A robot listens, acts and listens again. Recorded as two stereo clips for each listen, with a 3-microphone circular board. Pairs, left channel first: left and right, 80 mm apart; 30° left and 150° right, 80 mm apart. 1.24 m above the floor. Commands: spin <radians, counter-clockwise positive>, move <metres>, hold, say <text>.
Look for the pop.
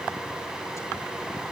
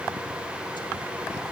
hold
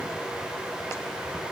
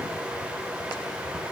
hold
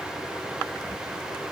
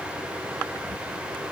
say I can't make out a pop to turn to.